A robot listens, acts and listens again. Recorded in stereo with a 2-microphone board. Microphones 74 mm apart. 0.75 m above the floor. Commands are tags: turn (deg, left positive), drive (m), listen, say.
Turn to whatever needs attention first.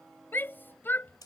<turn deg="30"/>
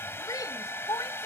<turn deg="120"/>
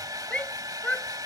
<turn deg="20"/>
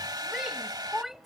<say>Found it: a shout, straight ahead.</say>